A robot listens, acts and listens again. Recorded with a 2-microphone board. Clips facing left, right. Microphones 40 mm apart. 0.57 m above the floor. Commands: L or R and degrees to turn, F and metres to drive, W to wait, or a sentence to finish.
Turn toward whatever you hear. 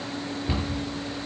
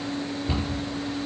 L25
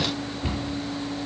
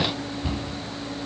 L130
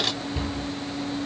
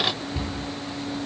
R20
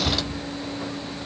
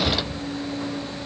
Found it: a cupboard door, straight ahead, over 4 m away.